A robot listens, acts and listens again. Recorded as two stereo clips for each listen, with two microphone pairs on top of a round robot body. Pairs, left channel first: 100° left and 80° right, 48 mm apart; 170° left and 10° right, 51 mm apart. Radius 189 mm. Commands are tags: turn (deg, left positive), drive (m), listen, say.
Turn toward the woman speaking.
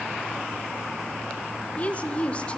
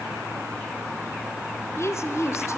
<turn deg="155"/>
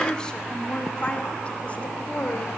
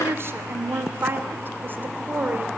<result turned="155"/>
<turn deg="45"/>
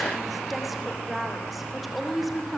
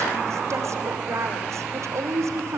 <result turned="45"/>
<turn deg="10"/>
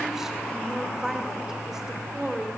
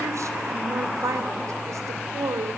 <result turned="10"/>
<say>Facing the woman speaking.</say>